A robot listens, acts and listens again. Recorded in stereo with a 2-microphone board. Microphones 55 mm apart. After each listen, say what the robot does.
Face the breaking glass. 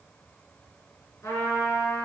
Keep listening.
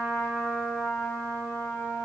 Keep listening.
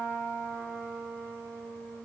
I can't make out breaking glass, only a trumpet.